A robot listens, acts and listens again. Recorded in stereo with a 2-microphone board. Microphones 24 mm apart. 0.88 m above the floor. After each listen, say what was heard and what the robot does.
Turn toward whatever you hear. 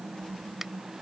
The finger snap: about 15° right or 165° right. Turn 15° right.
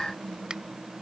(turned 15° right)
So it is at 150° right. Turn 150° right.
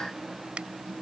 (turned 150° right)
Keep listening.
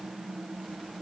The finger snap is now 50° right. Turn 50° right.
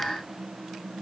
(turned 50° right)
Keep listening.
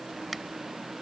Keep listening.
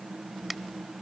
Found it: a finger snap, straight ahead.